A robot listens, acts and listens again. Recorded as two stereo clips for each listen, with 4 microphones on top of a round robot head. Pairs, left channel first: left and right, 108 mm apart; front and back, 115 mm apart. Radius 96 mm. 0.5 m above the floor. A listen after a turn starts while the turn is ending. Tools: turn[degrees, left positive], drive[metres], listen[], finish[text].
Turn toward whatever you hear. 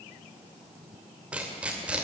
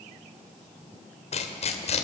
Thought: The tearing paper: 10° right.
Action: turn[-10]
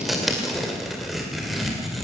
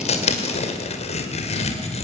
Action: finish[Facing the tearing paper, 2 to 4 m away.]